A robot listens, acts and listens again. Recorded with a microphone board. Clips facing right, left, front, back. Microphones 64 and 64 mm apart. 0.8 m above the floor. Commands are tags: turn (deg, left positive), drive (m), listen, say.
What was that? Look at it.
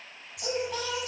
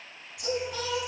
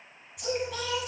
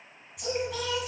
<turn deg="-90"/>
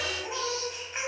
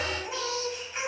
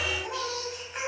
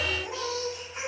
<turn deg="-20"/>
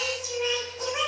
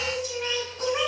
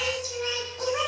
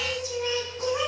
<turn deg="-10"/>
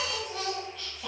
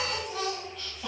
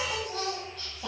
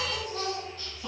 <say>Found it: singing, straight ahead.</say>